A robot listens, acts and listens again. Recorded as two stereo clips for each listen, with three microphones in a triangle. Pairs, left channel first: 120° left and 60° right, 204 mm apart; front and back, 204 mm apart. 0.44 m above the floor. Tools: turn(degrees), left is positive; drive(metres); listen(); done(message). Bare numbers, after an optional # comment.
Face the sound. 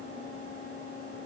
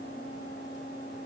listen()
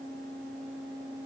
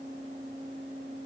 listen()
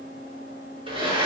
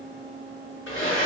done("Found it: a blender, straight ahead, over 4 m away.")